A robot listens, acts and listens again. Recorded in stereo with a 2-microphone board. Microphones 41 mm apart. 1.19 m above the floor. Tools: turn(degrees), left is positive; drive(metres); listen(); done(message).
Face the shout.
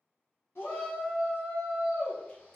turn(degrees=90)
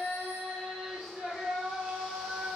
done("Facing the shout, 1 to 2 m away.")